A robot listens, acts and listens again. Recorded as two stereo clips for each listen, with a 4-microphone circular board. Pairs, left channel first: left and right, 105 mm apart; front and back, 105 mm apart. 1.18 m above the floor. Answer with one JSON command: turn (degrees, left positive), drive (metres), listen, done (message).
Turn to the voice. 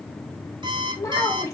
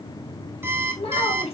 {"turn": 30}
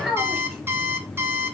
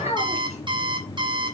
{"done": "Facing the child speaking, 1 to 2 m away."}